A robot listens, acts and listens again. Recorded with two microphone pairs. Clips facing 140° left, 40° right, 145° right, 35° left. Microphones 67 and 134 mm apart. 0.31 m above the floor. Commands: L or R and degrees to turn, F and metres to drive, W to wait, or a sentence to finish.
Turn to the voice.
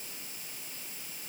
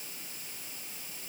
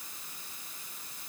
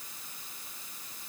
W
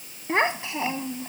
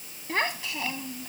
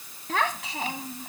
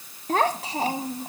L80
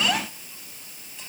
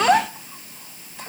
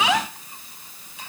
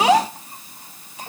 R10
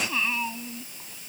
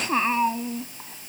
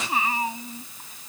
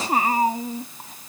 Facing the child speaking.